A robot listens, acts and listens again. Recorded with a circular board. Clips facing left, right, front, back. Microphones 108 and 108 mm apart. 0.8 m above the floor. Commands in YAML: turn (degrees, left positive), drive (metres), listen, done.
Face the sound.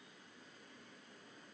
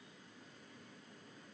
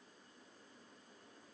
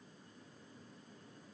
listen: true
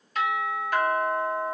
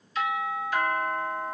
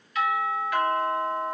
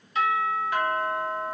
turn: 120
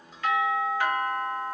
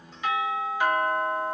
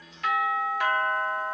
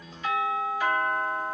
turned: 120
turn: -15
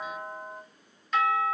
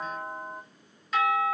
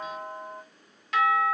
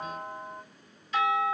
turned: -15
done: "Found it: a doorbell, straight ahead, 1 to 2 m away."